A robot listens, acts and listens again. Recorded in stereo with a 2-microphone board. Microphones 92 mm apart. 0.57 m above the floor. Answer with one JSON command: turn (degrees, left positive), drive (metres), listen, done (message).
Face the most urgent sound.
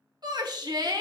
{"turn": -55}
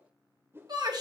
{"turn": -60}
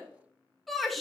{"done": "Found it: a shout, straight ahead, 1 to 2 m away."}